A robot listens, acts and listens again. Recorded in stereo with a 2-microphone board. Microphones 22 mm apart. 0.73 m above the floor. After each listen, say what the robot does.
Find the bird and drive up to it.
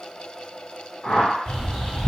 Turn 55° left.
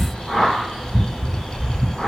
Turn 60° left.
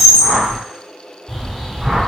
Drive 1.0 m forward.
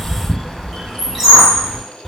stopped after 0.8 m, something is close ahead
Arrived at the bird, straight ahead.